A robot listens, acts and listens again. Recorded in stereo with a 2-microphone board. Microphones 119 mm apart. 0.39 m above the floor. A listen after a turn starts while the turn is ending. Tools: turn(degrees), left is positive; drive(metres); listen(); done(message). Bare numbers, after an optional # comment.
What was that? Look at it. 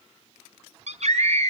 # The scream: about 70° right or 110° right.
turn(-70)
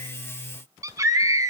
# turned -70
# So it is at 30° right.
turn(-30)
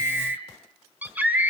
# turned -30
# The scream is now 15° right.
turn(-15)
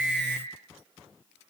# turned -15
done("Facing the scream.")